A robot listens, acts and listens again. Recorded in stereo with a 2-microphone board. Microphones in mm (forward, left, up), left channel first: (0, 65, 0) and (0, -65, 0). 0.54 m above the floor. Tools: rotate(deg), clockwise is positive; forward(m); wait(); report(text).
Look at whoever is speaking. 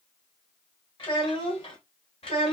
rotate(-50)
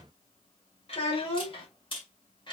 rotate(-40)
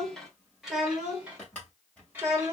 rotate(20)
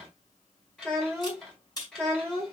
report("Found it: a child speaking, straight ahead, 1 to 2 m away.")